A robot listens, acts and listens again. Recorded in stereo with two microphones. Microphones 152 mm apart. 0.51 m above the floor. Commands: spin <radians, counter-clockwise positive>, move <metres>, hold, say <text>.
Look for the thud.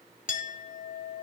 hold
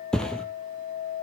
spin 0.52
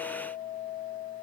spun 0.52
hold
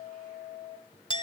say I heard a thud, but can't make it out now. It was about 25° right or 145° left.